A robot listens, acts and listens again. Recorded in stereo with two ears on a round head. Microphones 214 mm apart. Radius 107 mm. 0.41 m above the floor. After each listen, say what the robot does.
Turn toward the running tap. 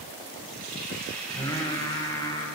Turn 40° right.
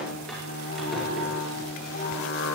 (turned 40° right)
Keep listening.
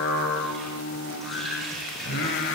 Found it: a running tap, straight ahead, over 4 m away.